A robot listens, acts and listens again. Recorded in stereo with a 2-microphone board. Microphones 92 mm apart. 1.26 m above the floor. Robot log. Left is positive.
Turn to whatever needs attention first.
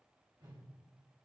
cmd idle
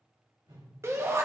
note: The shout: about 30° right or 150° right.
cmd yaw -30
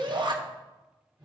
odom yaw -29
note: So it is at 120° right.
cmd yaw -120
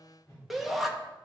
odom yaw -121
end: Facing the shout.